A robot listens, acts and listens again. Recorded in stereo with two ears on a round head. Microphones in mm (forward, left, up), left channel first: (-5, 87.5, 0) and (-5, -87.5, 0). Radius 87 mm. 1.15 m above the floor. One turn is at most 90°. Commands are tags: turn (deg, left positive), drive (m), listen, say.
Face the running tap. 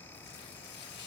<listen/>
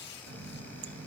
<turn deg="-65"/>
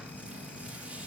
<say>Facing the running tap, under 1 m away.</say>